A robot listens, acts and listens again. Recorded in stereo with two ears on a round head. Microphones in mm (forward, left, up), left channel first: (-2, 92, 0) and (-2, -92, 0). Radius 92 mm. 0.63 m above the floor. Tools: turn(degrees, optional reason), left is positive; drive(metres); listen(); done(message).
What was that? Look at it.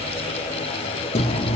turn(degrees=30, reason="The chewing: about 30° left or 150° left.")
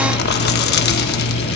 turn(degrees=115, reason="So it is at 115° left.")
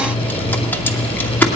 turn(degrees=10, reason="The chewing is now 10° left.")
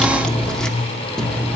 done("Found it: chewing, straight ahead.")